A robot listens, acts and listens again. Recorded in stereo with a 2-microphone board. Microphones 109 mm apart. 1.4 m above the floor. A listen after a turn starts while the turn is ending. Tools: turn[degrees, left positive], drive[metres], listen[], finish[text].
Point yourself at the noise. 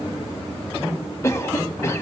Thought: The cough: about 25° left or 155° left.
Action: turn[25]
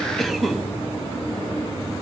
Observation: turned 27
Action: finish[Found it: a cough, straight ahead.]